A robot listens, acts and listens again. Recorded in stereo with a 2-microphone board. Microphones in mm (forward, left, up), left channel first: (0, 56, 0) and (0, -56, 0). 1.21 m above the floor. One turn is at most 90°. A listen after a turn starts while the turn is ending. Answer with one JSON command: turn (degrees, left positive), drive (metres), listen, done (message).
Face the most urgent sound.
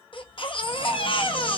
{"turn": 50}
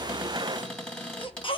{"turn": 65}
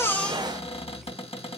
{"listen": true}
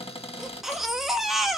{"done": "Found it: a baby crying, straight ahead."}